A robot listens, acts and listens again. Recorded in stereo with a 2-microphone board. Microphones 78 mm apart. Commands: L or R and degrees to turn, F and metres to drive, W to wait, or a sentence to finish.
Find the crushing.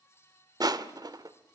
R60
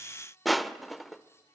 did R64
Facing the crushing, 1 to 2 m away.